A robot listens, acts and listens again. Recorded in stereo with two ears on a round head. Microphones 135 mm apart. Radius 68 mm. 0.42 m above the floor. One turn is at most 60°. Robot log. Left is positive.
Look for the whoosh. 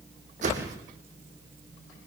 note: The whoosh: about 55° right or 125° right.
cmd yaw -55
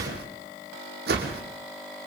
note: So it is at 70° right.
cmd yaw -60
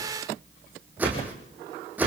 note: The whoosh is now 10° right.
cmd yaw -10
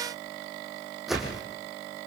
end: Found it: a whoosh, straight ahead.